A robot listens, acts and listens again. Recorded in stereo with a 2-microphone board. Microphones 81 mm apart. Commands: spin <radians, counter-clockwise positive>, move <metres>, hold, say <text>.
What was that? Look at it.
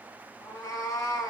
spin 0.70
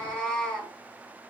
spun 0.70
spin 0.17
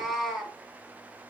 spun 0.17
say Found it: a cat meowing, straight ahead, 1 to 2 m away.